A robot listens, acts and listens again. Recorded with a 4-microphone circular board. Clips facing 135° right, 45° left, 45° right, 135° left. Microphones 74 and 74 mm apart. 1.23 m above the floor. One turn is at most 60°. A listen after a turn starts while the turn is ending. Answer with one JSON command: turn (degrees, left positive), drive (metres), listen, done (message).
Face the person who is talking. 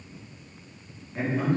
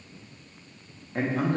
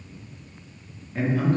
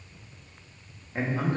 {"turn": 60}
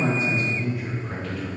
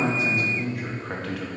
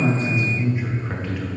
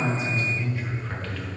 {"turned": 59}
{"turn": 35}
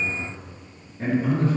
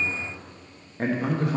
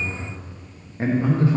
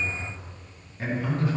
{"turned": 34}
{"turn": 20}
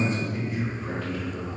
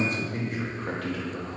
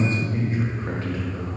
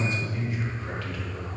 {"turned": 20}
{"turn": 20}
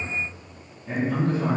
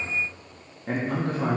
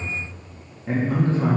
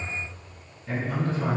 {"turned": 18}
{"turn": 10}
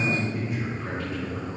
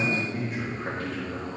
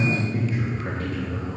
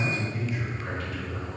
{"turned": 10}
{"done": "Found it: a man speaking, straight ahead."}